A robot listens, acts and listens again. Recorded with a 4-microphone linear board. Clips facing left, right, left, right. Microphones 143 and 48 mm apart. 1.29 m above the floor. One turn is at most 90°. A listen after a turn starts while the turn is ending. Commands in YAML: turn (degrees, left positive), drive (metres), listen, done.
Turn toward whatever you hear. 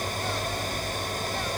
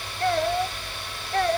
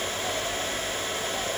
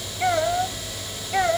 turn: -60
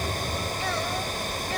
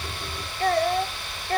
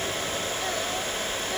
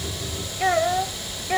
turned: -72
turn: -50
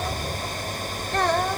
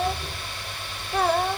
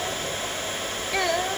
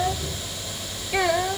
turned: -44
done: "Facing the child speaking."